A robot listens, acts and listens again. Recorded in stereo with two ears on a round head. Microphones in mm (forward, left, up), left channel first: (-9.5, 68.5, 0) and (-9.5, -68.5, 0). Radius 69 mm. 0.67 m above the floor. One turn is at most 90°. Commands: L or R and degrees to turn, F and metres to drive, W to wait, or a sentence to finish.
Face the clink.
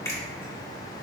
W
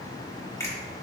W
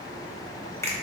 I can't make out a clink to turn to.